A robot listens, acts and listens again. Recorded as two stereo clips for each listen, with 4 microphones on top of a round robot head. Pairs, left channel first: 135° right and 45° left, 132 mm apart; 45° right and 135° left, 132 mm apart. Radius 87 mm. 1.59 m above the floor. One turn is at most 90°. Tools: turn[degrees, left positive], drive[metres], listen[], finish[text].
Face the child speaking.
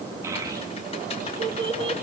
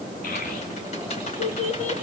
Thought: The child speaking: 10° right.
Action: turn[-10]
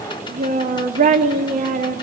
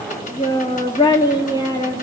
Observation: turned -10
Thought: The child speaking is now 20° left.
Action: turn[20]
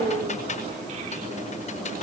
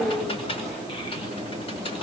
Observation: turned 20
Action: finish[Facing the child speaking, 2 to 4 m away.]